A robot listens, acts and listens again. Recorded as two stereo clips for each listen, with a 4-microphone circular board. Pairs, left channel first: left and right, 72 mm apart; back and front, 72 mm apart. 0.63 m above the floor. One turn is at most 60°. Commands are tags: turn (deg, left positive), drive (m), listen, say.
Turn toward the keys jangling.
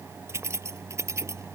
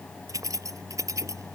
<turn deg="-45"/>
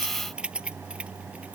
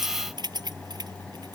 <turn deg="-15"/>
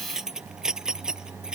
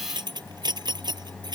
<turn deg="-10"/>
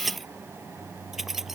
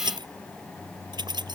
<say>Facing the keys jangling.</say>